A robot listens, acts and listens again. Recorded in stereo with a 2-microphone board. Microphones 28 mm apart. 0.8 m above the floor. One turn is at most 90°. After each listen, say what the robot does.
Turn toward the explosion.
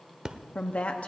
Turn 30° right.
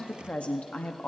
Keep listening.
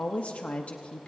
I heard an explosion, but can't make it out now. It was about straight ahead or 120° right.